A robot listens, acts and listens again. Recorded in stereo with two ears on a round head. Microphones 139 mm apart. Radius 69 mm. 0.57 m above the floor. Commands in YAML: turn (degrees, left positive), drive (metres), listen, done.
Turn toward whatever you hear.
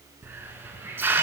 turn: -30
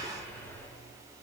turn: 15
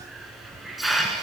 done: "Found it: a hiss, straight ahead, 1 to 2 m away."